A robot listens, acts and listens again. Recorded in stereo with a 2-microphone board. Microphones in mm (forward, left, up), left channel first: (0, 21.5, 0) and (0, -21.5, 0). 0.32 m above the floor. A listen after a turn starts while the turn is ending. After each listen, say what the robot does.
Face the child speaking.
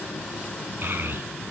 Turn 50° right.
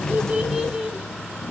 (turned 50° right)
Turn 15° right.
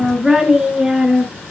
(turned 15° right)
Turn 15° right.
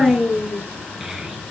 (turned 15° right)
Facing the child speaking, over 4 m away.